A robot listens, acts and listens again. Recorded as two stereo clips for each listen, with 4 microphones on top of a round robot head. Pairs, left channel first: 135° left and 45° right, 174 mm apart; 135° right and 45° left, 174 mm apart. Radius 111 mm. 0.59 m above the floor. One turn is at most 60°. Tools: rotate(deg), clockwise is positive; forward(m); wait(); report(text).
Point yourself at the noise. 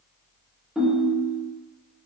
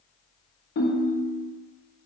rotate(60)
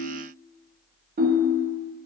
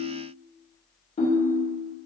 rotate(60)
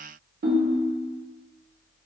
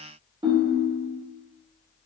rotate(20)
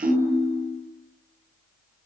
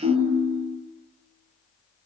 report("Facing the ringtone.")